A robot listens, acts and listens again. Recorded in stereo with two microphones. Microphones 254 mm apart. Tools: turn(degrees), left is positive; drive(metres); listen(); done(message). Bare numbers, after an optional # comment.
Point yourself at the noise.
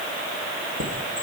# The chime: about 70° right or 110° right.
turn(-70)
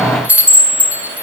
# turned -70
done("Facing the chime, 1 to 2 m away.")